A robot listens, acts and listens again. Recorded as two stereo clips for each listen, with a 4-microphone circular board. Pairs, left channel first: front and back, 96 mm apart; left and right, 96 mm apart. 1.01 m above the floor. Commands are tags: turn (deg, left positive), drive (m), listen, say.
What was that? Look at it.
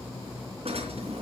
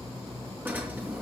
<turn deg="-160"/>
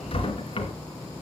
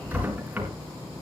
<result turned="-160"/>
<turn deg="-15"/>
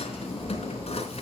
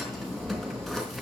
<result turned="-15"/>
<say>Facing the drawer, 2 to 4 m away.</say>